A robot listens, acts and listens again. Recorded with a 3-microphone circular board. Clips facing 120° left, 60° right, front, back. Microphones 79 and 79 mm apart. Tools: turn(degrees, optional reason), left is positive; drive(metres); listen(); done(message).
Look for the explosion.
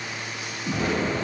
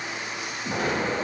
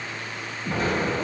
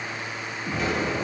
turn(degrees=-35, reason="The explosion: 35° right.")
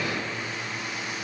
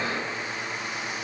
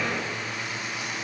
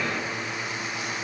done("I heard an explosion from this way, but can't make it out now.")